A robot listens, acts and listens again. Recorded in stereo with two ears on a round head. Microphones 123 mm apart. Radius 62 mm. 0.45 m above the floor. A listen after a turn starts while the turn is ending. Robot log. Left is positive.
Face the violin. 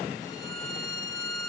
note: The violin: about 25° left or 155° left.
cmd yaw +25
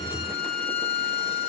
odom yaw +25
note: So it is at 130° left.
cmd yaw +130
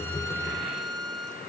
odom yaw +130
end: Found it: a violin, straight ahead.